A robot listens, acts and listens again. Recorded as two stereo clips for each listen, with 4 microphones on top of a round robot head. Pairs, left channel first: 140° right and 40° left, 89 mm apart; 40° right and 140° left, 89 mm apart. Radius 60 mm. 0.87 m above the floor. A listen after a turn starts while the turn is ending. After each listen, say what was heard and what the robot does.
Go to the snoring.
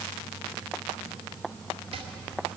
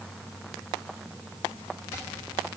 Keep listening.
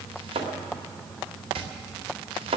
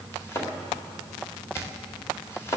Keep listening.
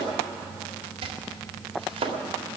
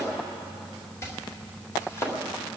I can't make out snoring, only chopping.